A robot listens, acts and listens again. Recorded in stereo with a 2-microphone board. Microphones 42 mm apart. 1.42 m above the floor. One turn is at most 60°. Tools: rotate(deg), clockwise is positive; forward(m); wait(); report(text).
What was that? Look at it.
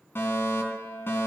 rotate(-60)
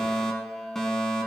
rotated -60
rotate(-10)
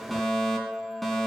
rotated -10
report("Facing the fire alarm, over 4 m away.")